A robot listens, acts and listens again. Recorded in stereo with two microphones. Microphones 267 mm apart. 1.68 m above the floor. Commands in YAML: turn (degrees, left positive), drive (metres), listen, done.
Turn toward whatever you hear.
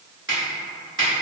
turn: -45
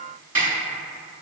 turn: -85
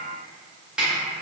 done: "Found it: a snare drum, straight ahead."